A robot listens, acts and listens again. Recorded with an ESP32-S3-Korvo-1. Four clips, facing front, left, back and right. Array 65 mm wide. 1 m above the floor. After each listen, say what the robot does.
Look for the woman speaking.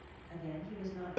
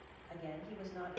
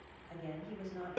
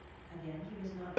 Turn 105° left.
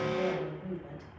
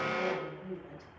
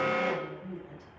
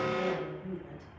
Turn 15° left.
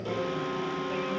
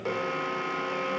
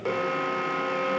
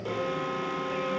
Keep listening.
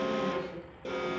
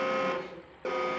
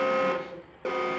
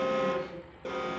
Keep listening.
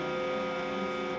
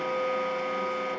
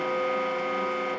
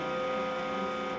I heard a woman speaking from this way, but can't make it out now.